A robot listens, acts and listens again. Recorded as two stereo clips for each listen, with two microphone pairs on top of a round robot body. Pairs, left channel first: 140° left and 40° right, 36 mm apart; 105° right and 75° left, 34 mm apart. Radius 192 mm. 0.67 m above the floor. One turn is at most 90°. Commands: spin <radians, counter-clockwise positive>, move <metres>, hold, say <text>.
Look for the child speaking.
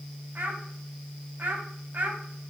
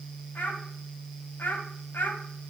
spin -1.40
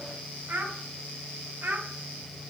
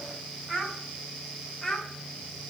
spin -0.35
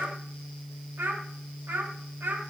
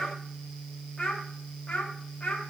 spin -0.61
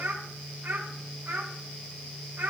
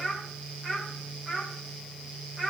say Facing the child speaking, 2 to 4 m away.